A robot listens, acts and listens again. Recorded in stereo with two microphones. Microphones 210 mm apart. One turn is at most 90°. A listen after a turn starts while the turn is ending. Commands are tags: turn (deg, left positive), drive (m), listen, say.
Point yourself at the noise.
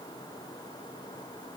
<listen/>
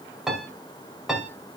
<turn deg="30"/>
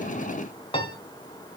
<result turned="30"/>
<turn deg="90"/>
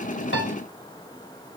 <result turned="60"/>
<turn deg="90"/>
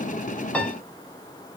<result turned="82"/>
<say>Found it: a piano, straight ahead, 2 to 4 m away.</say>